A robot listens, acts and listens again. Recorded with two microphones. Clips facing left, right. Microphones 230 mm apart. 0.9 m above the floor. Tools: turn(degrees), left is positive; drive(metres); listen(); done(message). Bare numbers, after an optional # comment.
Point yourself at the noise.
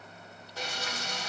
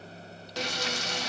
turn(-90)
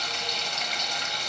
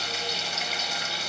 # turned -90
done("Facing the frying.")